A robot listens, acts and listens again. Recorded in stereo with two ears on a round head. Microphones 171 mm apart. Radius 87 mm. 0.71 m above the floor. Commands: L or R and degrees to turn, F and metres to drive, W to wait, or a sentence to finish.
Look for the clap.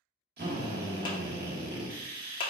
L25
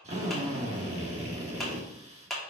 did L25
Found it: a clap, straight ahead.